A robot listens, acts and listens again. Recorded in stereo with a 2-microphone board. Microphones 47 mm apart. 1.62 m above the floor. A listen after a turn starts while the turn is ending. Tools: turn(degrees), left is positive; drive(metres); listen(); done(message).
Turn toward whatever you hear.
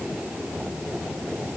listen()
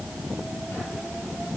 listen()
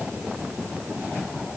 done("I can't make out anything.")